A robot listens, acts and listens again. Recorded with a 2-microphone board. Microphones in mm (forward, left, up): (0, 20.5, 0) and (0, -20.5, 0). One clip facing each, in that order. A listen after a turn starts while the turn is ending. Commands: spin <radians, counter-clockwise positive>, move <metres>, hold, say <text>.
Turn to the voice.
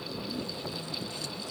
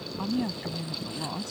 spin -1.05
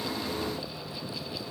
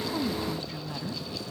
hold
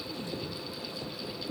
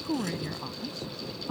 spin -1.05
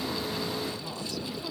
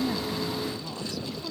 say Found it: a woman speaking, straight ahead.